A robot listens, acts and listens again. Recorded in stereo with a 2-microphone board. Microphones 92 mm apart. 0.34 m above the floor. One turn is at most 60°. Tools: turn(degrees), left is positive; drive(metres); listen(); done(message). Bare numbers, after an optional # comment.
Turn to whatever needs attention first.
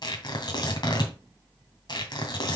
listen()
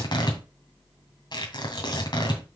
listen()
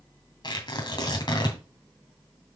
done("I can't make out anything urgent to turn to.")